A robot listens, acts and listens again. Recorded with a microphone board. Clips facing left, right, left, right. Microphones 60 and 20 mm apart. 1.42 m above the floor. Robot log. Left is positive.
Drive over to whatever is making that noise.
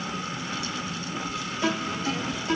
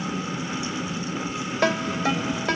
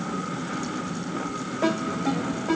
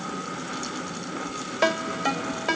note: The ringtone: about 70° right or 110° right.
cmd yaw -70
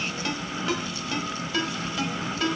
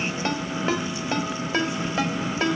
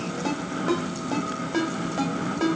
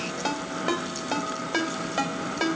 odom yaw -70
note: So it is at 35° right.
cmd yaw -35
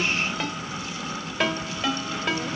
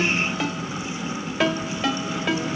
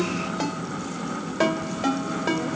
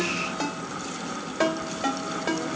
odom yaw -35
cmd fwd 1.0
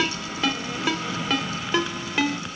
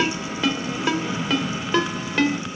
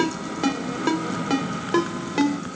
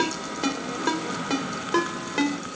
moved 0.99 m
cmd fwd 1.0
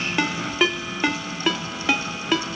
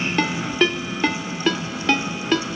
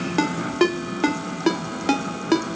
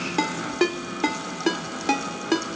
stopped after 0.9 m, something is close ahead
note: The ringtone is now 10° left.
cmd yaw +10
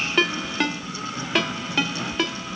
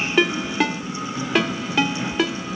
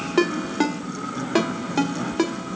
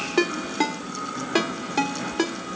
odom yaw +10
end: I am next to the ringtone.